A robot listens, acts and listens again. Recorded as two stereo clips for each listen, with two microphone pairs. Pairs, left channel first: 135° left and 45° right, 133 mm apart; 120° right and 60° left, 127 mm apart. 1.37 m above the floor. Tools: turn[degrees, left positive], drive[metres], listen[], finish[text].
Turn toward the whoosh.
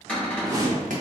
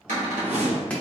Thought: The whoosh: 25° left.
Action: turn[25]
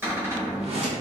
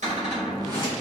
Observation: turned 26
Action: finish[Facing the whoosh.]